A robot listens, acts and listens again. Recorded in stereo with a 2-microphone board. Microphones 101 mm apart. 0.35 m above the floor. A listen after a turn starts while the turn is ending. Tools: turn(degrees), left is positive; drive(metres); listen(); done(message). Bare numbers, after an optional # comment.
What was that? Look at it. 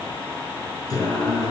# The singing: about 35° left or 145° left.
turn(35)
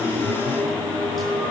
done("Facing the singing.")